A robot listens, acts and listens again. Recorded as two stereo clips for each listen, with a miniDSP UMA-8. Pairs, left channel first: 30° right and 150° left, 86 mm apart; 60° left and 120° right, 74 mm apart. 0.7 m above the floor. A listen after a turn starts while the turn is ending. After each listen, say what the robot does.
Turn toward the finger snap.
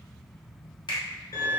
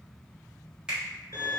Turn 45° right.
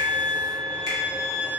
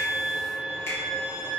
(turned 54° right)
Turn 10° left.
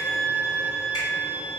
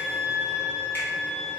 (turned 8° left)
Keep listening.
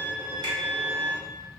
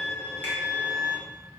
Facing where the finger snap came from. I can't hear it now.